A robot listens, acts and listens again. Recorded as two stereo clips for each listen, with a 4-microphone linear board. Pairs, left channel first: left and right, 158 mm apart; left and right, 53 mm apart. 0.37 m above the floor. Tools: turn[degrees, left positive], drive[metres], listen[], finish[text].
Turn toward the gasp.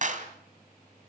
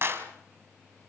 Action: listen[]
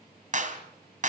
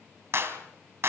Action: listen[]
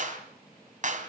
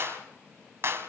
Action: finish[I can't make out a gasp, only a clap.]